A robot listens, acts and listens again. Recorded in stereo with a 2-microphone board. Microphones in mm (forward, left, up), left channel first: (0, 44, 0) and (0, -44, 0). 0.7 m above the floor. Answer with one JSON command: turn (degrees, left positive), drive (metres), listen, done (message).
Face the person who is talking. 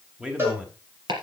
{"turn": -30}
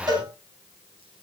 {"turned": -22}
{"listen": true}
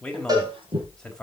{"turn": 10}
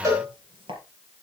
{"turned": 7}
{"listen": true}
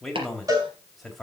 {"done": "Found it: a man speaking, straight ahead."}